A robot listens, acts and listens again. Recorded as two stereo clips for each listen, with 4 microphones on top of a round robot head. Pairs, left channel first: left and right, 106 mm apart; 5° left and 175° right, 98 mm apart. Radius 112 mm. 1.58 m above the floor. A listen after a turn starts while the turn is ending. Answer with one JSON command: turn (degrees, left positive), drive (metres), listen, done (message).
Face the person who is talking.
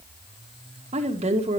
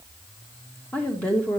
{"turn": -75}
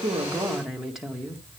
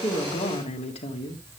{"done": "Found it: a woman speaking, straight ahead."}